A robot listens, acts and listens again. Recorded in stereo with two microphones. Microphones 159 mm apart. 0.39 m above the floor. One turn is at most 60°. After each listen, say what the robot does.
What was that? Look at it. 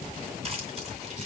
Turn 45° right.
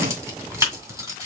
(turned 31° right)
Turn 20° right.
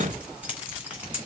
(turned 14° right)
Turn 10° right.
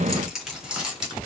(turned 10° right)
Facing the keys jangling, 2 to 4 m away.